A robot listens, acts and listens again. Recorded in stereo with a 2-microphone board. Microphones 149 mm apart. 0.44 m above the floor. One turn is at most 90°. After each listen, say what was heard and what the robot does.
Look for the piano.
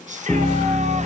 Turn 30° right.
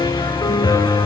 So it is at 30° left. Turn 30° left.
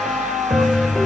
Found it: a piano, straight ahead, under 1 m away.